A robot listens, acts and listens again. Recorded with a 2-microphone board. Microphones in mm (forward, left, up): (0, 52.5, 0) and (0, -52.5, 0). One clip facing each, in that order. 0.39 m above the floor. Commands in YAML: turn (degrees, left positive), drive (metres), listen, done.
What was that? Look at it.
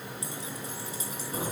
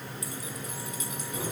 turn: 35
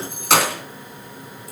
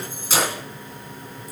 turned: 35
turn: 105
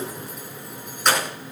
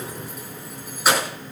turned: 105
done: "Facing the keys jangling, over 4 m away."